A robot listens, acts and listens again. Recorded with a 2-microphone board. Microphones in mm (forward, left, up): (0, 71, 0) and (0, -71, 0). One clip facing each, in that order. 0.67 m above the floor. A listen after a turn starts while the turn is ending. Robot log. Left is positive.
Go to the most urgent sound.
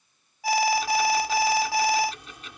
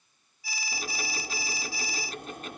cmd yaw +90
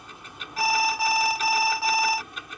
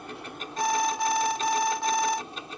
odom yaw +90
cmd fwd 1.0
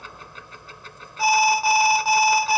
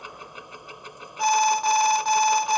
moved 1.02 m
note: The alarm is now 10° left.
cmd yaw +10
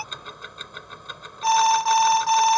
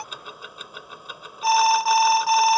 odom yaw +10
cmd fwd 1.0
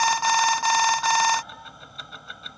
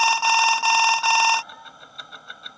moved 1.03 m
note: The alarm is now 10° right.
cmd yaw -10
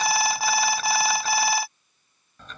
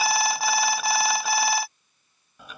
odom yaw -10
cmd fwd 1.0
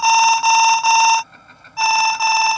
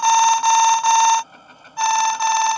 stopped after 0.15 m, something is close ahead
end: I am next to the alarm.